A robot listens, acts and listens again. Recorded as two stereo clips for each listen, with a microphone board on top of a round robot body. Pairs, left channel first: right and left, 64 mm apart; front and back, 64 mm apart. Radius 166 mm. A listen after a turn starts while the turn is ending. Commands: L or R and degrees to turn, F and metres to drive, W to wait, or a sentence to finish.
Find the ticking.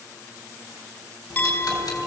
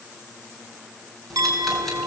R85
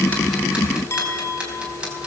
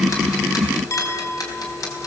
L20
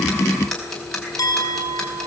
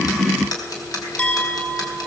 Found it: ticking, straight ahead.